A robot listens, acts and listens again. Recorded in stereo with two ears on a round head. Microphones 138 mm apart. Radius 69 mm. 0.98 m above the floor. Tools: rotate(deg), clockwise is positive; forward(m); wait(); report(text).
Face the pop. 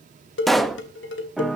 rotate(-30)
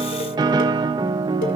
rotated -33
wait()
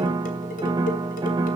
report("I heard a pop, but can't make it out now. It was about 35° right or 145° left.")